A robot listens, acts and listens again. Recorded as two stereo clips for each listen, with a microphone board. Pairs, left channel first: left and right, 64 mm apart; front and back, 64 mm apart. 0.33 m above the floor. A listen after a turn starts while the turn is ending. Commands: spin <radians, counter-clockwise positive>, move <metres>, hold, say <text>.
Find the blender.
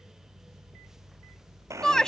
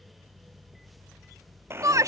spin -2.18
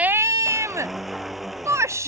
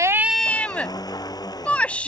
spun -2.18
say Facing the blender.